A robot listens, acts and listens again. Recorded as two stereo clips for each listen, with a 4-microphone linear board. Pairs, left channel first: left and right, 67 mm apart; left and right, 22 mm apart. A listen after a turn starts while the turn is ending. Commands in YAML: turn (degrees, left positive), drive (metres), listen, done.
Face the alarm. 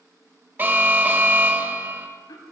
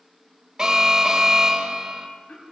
turn: -30
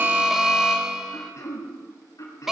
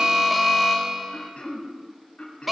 turn: -10
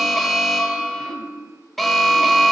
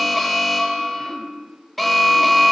done: "Found it: an alarm, straight ahead."